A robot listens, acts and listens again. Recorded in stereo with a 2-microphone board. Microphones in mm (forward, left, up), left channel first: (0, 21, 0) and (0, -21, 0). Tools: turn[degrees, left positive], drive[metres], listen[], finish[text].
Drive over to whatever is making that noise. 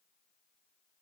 Action: listen[]
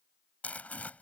Thought: The crumpling: about 35° left or 145° left.
Action: turn[35]
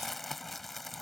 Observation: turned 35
Action: drive[1.0]
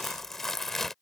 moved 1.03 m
Thought: The crumpling is now 10° left.
Action: turn[10]
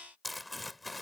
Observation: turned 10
Action: drive[1.0]
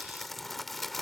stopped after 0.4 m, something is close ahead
Action: finish[Arrived at the crumpling, straight ahead.]